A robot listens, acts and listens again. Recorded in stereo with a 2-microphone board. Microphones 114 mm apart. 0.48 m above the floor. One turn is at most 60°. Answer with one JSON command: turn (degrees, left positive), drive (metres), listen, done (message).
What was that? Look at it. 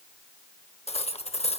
{"turn": 60}
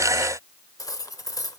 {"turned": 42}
{"turn": 35}
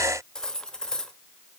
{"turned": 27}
{"done": "Found it: cutlery clinking, straight ahead."}